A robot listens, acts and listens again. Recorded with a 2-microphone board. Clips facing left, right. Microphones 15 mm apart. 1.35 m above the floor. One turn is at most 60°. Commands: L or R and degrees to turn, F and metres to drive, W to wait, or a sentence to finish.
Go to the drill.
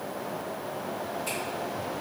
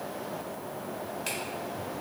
W
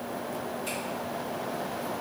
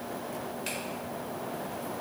W
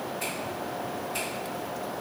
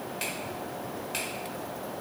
I can't make out a drill to turn to.